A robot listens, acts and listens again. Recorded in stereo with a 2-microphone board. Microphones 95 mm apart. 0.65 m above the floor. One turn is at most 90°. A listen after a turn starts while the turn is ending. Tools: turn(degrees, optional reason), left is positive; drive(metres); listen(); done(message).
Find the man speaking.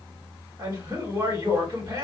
turn(degrees=-35, reason="The man speaking: about 35° right or 145° right.")
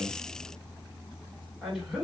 done("Found it: a man speaking, straight ahead.")